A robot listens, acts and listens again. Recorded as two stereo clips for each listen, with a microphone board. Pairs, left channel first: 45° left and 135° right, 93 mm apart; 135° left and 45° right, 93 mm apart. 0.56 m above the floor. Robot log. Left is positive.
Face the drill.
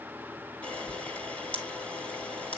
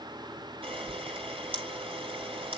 cmd idle
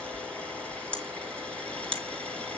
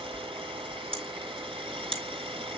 cmd idle
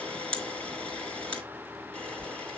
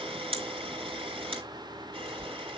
end: I can't make out a drill, only a camera shutter.